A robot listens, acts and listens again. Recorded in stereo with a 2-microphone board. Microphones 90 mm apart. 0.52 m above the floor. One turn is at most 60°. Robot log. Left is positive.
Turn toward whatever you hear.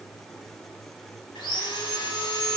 cmd yaw +60
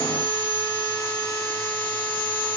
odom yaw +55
note: So it is at 20° left.
cmd yaw +20
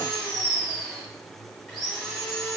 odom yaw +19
end: Facing the sawing, 1 to 2 m away.